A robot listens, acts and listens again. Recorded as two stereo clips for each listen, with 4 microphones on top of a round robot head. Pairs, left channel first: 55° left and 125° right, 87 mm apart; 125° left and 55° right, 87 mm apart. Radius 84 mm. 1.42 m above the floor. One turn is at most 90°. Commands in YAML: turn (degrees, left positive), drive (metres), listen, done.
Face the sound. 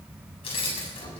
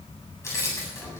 turn: 65
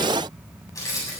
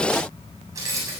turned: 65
done: "Facing the keys jangling, over 4 m away."